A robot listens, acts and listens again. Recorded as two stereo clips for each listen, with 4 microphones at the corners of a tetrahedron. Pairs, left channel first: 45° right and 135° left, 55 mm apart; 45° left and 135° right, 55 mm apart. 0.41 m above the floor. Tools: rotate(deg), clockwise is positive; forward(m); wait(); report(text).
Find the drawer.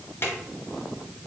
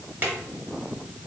rotate(85)
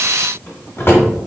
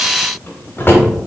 report("Found it: a drawer, straight ahead.")